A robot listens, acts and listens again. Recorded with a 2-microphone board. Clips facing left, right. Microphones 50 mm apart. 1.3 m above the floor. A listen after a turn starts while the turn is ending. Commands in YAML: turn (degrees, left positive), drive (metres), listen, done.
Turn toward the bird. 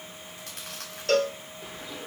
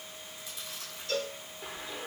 turn: -30
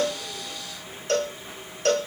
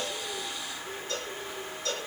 turn: -140
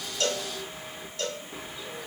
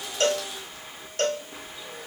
done: "Found it: a bird, straight ahead."